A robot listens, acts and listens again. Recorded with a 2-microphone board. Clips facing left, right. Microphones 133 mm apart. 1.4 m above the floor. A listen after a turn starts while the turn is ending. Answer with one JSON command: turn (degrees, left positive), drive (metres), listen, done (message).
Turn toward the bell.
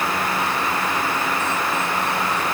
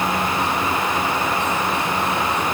{"listen": true}
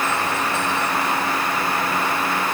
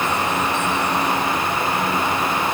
{"listen": true}
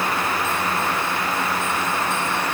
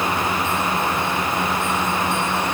{"done": "I can't make out a bell."}